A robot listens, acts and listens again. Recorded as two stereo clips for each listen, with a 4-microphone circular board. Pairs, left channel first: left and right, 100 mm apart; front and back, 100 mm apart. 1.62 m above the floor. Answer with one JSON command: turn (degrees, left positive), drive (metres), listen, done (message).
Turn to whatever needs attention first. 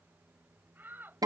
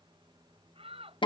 {"turn": -160}
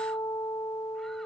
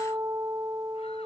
{"listen": true}
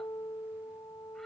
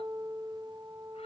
{"listen": true}
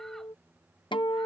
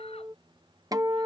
{"done": "Facing where the shout came from. I can't hear it now."}